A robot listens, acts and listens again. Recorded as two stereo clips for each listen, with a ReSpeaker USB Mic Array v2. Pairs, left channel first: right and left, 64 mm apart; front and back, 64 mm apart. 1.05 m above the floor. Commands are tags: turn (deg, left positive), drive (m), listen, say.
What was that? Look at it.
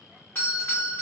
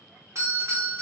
<turn deg="-145"/>
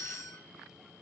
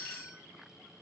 <say>Facing the doorbell.</say>